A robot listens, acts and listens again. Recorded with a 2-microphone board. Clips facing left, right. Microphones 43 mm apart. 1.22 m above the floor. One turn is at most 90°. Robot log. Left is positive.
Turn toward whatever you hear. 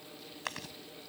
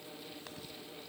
cmd yaw +90
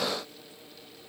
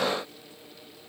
cmd idle
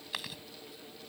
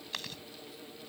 note: The chewing is now 10° left.
cmd yaw +10
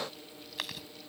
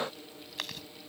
end: Found it: chewing, straight ahead.